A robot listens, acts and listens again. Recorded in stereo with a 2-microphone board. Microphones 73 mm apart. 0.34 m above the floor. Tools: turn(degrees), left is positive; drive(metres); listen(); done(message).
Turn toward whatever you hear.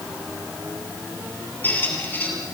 turn(degrees=25)
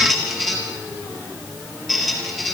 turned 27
done("Found it: a squeak, straight ahead.")